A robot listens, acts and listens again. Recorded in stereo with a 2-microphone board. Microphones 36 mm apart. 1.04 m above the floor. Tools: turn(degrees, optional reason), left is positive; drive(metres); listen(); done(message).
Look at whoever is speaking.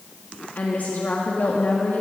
turn(degrees=50, reason="The woman speaking: about 50° left or 130° left.")
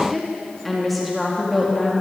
done("Found it: a woman speaking, straight ahead, 1 to 2 m away.")